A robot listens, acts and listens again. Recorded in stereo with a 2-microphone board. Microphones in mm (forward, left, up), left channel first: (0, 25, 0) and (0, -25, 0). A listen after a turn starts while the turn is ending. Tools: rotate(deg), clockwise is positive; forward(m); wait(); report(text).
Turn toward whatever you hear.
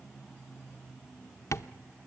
rotate(-75)
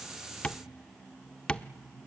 rotate(-25)
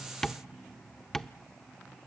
rotate(-10)
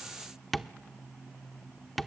report("Facing the tapping, under 1 m away.")